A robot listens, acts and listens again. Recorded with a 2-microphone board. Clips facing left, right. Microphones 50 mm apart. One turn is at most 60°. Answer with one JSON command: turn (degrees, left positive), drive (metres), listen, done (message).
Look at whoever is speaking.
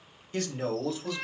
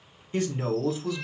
{"turn": -30}
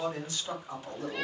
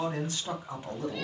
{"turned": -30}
{"turn": -60}
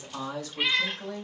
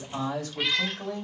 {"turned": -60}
{"turn": -60}
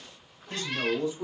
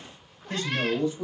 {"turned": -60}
{"turn": -35}
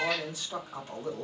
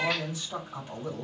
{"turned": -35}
{"done": "Found it: a man speaking, straight ahead, 2 to 4 m away."}